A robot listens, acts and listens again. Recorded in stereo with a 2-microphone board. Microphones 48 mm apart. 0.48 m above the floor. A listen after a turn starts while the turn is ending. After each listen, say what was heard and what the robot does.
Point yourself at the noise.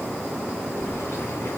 The keys jangling: about 70° left or 110° left. Turn 70° left.
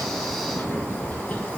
So it is at 35° left. Turn 35° left.
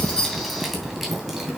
The keys jangling is now 10° right. Turn 10° right.
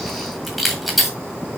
Facing the keys jangling, 1 to 2 m away.